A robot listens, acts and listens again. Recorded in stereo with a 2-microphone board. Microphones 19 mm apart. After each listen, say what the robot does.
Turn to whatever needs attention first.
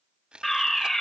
Turn 20° left.
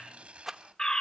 Turn 140° left.
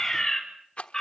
Turn 25° left.
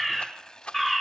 Found it: a fire alarm, straight ahead.